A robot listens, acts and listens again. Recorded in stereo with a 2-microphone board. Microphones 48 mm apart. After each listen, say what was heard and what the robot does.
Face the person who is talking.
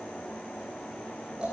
Keep listening.
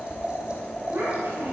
The child speaking: about 70° right or 110° right. Turn 70° right.
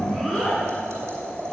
Facing the child speaking, over 4 m away.